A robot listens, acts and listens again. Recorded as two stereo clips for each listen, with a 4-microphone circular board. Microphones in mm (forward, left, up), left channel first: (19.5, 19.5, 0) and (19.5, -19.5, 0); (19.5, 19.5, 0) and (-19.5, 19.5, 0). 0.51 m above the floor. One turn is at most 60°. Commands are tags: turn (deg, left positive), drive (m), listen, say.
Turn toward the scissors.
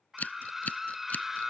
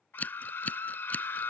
<turn deg="45"/>
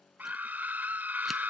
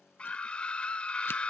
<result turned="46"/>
<listen/>
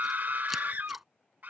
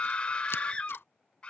<listen/>
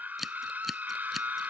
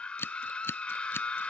<say>Facing the scissors.</say>